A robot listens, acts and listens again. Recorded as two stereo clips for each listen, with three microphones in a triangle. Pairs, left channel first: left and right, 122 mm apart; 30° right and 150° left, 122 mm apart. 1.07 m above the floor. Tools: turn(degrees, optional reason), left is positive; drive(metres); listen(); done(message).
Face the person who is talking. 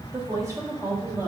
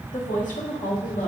turn(degrees=-20, reason="The woman speaking: 20° right.")
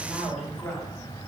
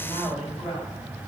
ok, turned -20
turn(degrees=10, reason="The woman speaking is now 10° left.")
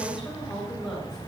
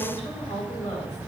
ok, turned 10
done("Found it: a woman speaking, straight ahead.")